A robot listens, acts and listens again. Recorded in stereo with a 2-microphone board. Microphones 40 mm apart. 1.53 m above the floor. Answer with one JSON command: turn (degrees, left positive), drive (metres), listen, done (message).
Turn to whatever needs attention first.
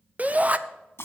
{"turn": -40}
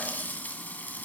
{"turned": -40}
{"listen": true}
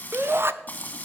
{"turn": -100}
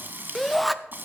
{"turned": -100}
{"done": "Found it: a shout, straight ahead, under 1 m away."}